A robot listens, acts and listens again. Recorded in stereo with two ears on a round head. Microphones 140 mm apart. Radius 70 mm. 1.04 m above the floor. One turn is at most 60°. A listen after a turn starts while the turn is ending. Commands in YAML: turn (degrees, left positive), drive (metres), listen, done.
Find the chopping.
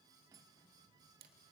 listen: true
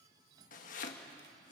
turn: 55
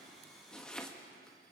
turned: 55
done: "Found it: chopping, straight ahead."